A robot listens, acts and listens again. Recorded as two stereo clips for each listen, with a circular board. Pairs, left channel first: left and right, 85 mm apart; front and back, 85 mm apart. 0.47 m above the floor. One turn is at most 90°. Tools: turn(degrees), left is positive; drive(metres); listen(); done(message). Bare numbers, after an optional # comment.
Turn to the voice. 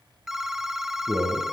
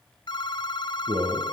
# The man speaking: 155° right.
turn(-90)
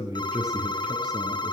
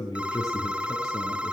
# The man speaking is now 50° right.
turn(-50)
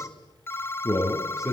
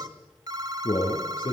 done("Found it: a man speaking, straight ahead, over 4 m away.")